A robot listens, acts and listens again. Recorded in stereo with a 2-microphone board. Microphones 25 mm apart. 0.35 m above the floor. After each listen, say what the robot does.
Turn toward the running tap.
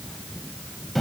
Keep listening.
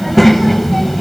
Keep listening.
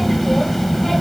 I can't make out a running tap to turn to.